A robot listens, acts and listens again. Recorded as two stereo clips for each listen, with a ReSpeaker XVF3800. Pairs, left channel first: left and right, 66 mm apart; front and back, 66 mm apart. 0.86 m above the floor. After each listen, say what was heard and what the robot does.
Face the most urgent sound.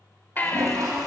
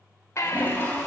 The baby crying: 30° left. Turn 30° left.
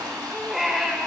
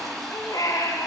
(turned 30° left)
Found it: a baby crying, straight ahead.